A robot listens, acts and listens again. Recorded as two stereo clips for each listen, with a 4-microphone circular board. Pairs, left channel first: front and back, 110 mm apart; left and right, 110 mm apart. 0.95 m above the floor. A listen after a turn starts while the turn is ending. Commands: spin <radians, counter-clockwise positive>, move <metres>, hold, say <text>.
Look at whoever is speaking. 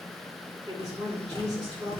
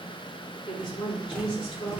spin 2.27
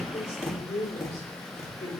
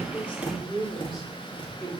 say Facing the woman speaking.